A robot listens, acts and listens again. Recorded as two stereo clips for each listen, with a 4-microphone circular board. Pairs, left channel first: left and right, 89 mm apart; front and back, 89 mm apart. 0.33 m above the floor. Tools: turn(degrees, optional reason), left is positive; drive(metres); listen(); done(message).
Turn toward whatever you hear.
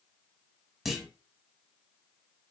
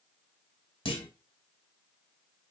done("Facing the clunk.")